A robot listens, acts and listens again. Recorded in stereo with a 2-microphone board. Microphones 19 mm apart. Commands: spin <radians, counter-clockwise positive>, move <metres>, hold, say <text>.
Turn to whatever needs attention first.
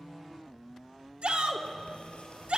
spin -1.57
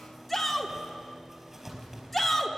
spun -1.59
say Facing the shout.